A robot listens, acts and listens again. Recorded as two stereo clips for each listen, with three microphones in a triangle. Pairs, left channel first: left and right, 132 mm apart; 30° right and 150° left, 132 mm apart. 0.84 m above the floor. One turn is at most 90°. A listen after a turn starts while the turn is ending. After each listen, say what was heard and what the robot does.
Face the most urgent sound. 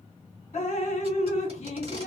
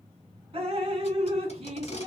Keep listening.
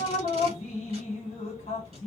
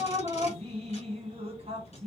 Keep listening.
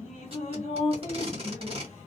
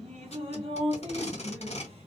I can't make out anything urgent to turn to.